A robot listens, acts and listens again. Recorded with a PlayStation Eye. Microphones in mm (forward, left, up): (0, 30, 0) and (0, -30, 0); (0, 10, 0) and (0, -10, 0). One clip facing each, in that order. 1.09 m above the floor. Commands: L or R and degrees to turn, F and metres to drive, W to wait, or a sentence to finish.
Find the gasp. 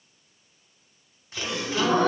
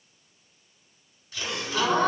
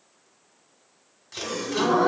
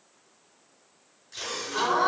R70
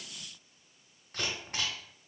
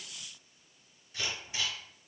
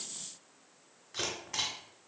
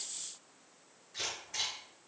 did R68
W
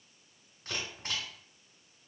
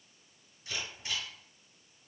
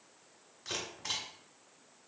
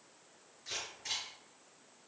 I heard a gasp, but can't make it out now. It was about 5° right or 40° right.